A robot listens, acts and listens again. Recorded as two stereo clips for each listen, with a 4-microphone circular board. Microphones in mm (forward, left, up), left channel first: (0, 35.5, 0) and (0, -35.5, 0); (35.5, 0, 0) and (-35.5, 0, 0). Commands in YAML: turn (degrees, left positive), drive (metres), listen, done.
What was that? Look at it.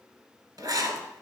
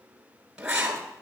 turn: -105
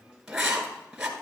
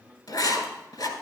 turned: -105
turn: -10
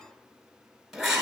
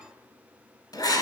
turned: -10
done: "Found it: writing, straight ahead."